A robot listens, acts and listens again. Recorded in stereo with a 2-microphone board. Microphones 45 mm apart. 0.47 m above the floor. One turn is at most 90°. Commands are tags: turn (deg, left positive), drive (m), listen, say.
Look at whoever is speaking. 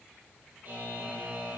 <listen/>
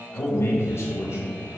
<turn deg="70"/>
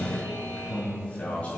<turn deg="40"/>
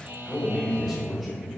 <turn deg="10"/>
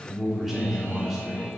<say>Found it: a man speaking, straight ahead.</say>